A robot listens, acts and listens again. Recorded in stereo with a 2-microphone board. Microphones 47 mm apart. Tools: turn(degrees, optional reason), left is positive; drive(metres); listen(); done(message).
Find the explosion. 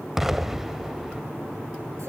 turn(degrees=-30)
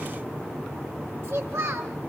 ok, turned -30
listen()
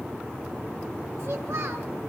done("I heard an explosion, but can't make it out now. It was about 20° left or 140° right.")